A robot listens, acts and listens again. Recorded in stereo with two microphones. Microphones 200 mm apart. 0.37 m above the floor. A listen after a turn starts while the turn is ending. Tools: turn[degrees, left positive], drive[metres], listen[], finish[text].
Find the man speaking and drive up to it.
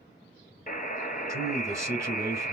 Action: turn[-30]
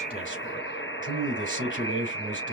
Thought: So it is at 135° right.
Action: turn[-135]
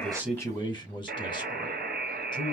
Thought: The man speaking is now 25° left.
Action: turn[25]
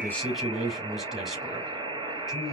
Action: drive[1.0]
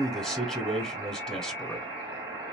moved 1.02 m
Action: drive[1.0]
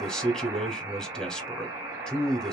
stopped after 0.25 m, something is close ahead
Action: finish[Arrived at the man speaking, straight ahead.]